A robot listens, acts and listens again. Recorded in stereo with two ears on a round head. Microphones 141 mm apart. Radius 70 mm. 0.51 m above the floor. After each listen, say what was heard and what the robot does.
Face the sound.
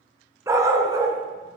The dog barking: about 25° right or 155° right. Turn 25° right.
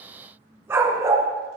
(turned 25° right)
The dog barking: about 20° right or 160° right. Turn 20° right.
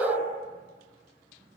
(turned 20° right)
Turn 30° right.
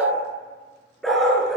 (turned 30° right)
Found it: a dog barking, straight ahead, 2 to 4 m away.